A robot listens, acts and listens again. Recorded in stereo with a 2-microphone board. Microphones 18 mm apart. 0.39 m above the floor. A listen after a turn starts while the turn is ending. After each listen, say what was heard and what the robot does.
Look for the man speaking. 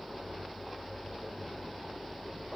Keep listening.
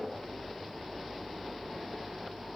Keep listening.
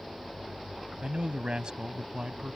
The man speaking: about 55° right or 125° right. Turn 55° right.
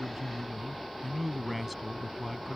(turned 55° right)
Facing the man speaking.